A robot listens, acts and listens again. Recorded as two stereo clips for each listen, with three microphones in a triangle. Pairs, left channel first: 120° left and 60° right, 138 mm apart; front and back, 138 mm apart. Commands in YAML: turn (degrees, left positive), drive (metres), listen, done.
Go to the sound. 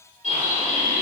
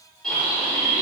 turn: -85
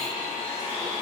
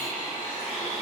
turn: 10
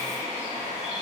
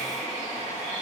drive: 1.0
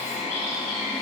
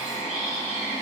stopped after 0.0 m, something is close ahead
done: "Something is in my way. I am facing the bird but have not reached it."